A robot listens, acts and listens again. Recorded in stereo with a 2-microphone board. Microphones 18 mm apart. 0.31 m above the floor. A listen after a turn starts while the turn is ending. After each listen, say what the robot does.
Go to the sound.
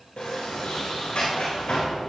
Turn 90° left.
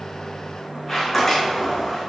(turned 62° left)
Turn 15° left.
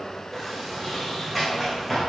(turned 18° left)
Drive 1.0 m forward.
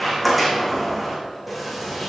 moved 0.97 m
Drive 1.0 m forward.
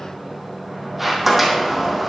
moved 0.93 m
Turn 10° right.
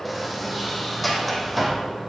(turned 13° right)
Drive 1.0 m forward.
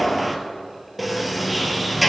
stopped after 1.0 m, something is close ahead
Arrived at the sliding door, straight ahead.